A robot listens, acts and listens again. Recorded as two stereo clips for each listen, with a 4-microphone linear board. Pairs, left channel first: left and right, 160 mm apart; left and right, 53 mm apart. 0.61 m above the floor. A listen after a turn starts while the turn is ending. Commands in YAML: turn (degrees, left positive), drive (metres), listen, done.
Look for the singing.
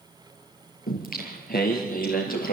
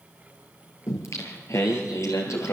turn: 65
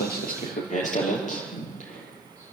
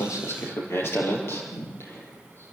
turn: 50
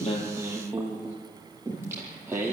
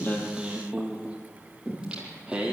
turn: -15
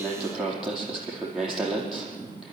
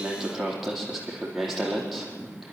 done: "Facing the singing."